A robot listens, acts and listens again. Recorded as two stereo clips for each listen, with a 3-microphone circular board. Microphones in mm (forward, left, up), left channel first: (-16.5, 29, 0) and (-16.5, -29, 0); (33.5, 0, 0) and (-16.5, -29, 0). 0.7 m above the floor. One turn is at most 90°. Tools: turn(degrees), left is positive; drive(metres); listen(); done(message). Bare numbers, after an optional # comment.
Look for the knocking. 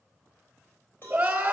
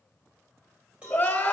listen()
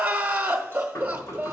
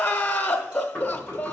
# The knocking: 95° left.
turn(90)
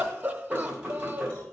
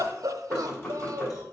# The knocking is now 20° right.
turn(-20)
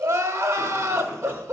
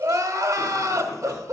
listen()
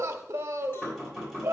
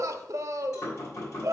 done("Found it: knocking, straight ahead, 2 to 4 m away.")